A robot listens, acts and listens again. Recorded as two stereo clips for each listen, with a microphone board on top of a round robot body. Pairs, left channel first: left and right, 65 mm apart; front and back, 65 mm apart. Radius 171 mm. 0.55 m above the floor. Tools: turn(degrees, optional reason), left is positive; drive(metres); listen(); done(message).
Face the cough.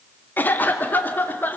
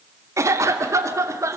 turn(degrees=150, reason="The cough: 150° left.")
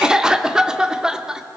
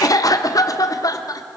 turn(degrees=-10, reason="The cough is now 10° right.")
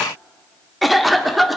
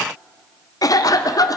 done("Facing the cough.")